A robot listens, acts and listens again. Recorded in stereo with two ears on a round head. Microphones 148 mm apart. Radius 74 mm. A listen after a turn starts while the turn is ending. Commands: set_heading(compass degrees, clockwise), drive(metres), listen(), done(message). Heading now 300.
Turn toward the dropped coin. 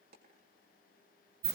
set_heading(0)
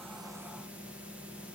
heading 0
listen()
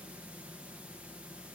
done("I heard a dropped coin, but can't make it out now. It was about straight ahead or 60° right.")